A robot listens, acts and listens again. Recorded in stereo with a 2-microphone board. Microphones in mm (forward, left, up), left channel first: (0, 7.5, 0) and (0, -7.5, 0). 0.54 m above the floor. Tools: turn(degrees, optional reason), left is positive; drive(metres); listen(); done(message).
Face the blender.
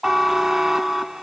listen()
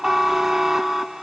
listen()
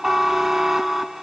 done("I can't make out a blender, only a buzzer.")